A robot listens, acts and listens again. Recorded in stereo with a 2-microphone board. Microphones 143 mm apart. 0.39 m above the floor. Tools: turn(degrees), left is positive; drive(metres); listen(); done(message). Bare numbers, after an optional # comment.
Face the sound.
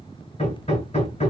# The hammering: about 50° left or 130° left.
turn(50)
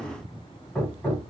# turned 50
# So it is at 10° left.
turn(10)
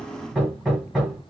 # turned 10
done("Found it: hammering, straight ahead, 1 to 2 m away.")